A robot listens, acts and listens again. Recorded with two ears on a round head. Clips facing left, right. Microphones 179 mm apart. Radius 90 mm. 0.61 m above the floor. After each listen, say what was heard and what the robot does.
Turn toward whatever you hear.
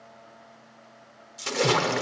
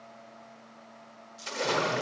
The splash: about 65° left or 115° left. Turn 65° left.
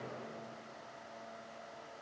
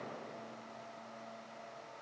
Keep listening.
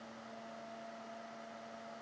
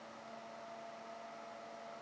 I heard a splash, but can't make it out now. It was about straight ahead or 50° left.